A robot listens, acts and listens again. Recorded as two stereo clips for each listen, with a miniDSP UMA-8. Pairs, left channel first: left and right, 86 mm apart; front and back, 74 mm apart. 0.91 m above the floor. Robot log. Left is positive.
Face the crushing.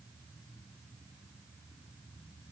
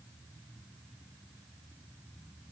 cmd idle
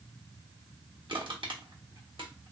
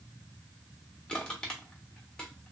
note: The crushing: 75° right.
cmd yaw -75
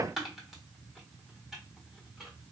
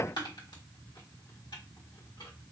end: Facing the crushing, 1 to 2 m away.